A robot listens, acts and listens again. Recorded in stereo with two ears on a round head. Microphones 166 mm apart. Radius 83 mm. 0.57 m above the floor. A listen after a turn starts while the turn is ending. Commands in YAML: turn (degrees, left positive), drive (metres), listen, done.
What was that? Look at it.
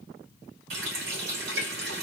turn: -75
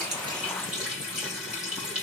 done: "Found it: a running tap, straight ahead."